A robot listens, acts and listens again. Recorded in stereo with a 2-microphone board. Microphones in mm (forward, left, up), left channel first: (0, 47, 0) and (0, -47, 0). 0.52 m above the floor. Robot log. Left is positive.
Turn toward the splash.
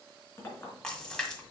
cmd yaw +30
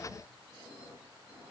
cmd idle
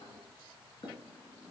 end: I heard a splash, but can't make it out now. It was about 20° right or 140° left.